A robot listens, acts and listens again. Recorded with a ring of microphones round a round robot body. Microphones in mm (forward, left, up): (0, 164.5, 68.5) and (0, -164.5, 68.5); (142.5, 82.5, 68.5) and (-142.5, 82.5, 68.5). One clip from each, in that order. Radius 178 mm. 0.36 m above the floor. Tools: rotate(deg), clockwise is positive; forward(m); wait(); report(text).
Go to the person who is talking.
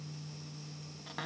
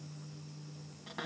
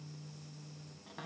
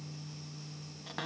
wait()
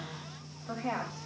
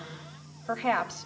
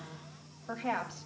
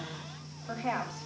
rotate(80)
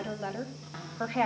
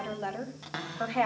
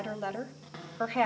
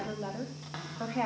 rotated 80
forward(1.0)
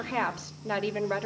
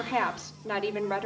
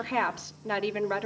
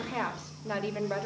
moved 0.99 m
forward(1.0)
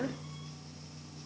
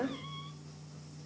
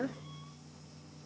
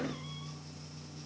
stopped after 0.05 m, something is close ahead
report("I am next to the woman speaking.")